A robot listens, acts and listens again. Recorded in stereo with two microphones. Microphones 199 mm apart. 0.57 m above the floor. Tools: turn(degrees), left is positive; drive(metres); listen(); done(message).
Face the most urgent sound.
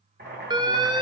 turn(degrees=-20)
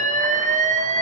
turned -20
turn(degrees=-135)
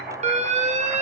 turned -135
turn(degrees=-40)
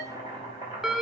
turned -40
done("Facing the alarm.")